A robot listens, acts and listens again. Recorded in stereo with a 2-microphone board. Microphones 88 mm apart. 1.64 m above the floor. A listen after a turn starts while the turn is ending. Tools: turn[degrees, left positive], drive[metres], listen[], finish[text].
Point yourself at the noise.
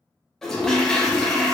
Action: turn[30]
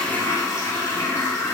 Thought: So it is at 145° left.
Action: turn[145]
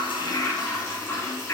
Thought: The toilet flushing is now 35° left.
Action: turn[35]
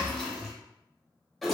Action: finish[Found it: a toilet flushing, straight ahead, under 1 m away.]